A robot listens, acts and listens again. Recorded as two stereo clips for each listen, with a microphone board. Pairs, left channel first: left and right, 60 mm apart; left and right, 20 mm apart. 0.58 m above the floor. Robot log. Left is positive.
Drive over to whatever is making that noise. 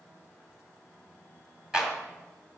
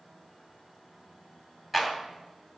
cmd yaw -30
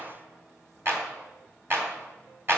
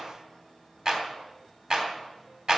note: So it is at 135° right.
cmd yaw -135
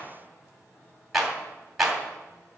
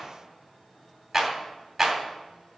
cmd fwd 1.0
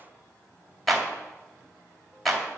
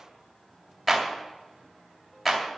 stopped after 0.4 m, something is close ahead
end: Blocked. The clap is further on, straight ahead.